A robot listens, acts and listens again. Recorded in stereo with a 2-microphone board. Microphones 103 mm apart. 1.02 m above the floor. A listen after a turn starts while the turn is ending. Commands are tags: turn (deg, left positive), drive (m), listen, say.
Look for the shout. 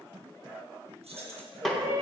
<turn deg="-35"/>
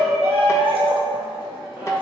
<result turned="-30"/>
<turn deg="-10"/>
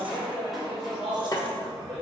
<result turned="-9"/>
<say>Found it: a shout, straight ahead, 1 to 2 m away.</say>